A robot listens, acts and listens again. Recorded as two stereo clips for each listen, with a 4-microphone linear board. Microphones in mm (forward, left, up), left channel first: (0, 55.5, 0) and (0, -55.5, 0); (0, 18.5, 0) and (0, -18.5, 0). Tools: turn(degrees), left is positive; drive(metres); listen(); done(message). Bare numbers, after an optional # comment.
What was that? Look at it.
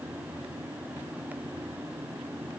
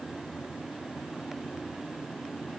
listen()
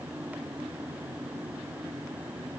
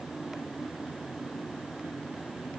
listen()
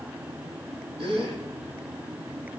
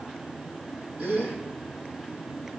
# The gasp: about 50° right or 130° right.
turn(-50)
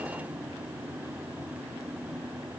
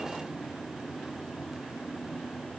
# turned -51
listen()
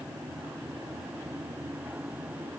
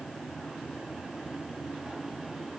done("I heard a gasp, but can't make it out now. It was about straight ahead or 75° right.")